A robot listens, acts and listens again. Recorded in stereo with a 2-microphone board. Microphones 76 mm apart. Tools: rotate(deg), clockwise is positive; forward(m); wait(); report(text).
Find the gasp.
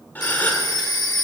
rotate(-20)
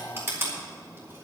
wait()
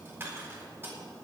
report("I heard a gasp, but can't make it out now. It was about straight ahead or 140° left.")